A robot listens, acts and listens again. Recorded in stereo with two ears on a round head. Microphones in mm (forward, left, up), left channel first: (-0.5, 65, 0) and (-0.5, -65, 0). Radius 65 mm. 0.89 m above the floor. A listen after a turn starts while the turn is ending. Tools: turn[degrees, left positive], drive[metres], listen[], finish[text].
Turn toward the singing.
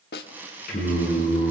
Thought: The singing: about 65° left or 115° left.
Action: turn[65]
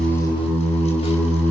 Thought: So it is at 15° left.
Action: turn[15]
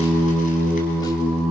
Action: finish[Facing the singing.]